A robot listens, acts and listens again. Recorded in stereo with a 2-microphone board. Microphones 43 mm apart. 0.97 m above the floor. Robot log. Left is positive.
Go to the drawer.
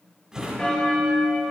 note: The drawer: about 20° right or 160° right.
cmd yaw -20
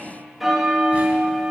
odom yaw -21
cmd idle
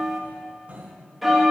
note: So it is at 140° right.
cmd yaw -140
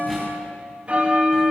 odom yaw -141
cmd idle
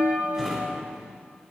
cmd fwd 1.0
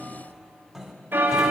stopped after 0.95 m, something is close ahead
end: I am next to the drawer.